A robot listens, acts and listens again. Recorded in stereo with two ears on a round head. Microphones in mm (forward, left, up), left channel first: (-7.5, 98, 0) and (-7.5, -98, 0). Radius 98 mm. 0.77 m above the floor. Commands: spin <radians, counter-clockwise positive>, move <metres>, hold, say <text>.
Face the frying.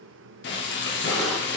spin 0.96
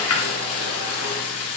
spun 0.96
spin 1.22
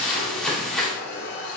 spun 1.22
say Facing the frying, under 1 m away.